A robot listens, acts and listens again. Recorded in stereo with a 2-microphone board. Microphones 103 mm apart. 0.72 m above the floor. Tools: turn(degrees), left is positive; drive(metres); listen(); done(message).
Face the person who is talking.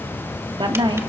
turn(degrees=-50)
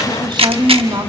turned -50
turn(degrees=-60)
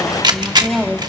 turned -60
done("Facing the woman speaking.")